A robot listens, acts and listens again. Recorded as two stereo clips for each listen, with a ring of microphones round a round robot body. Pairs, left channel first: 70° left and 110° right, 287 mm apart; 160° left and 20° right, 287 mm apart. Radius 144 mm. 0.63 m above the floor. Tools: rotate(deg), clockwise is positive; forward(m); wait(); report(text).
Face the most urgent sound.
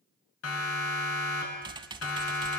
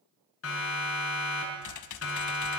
rotate(-115)
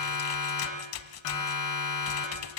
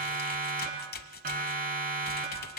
rotate(-40)
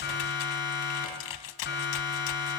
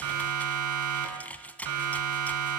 rotate(-10)
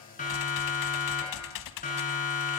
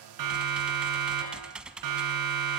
report("Found it: a siren, straight ahead.")